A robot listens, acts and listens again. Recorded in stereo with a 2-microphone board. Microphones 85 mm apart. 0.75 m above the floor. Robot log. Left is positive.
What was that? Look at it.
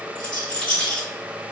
cmd yaw -90
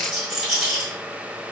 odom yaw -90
end: Facing the rattle.